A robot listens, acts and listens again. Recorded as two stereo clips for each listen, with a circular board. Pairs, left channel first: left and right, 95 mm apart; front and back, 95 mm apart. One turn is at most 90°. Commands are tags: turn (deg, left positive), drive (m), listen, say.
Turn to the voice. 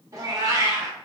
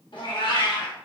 <listen/>
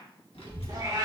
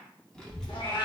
<turn deg="80"/>
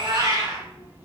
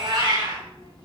<turn deg="-20"/>
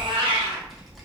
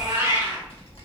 <say>Facing the child speaking, 1 to 2 m away.</say>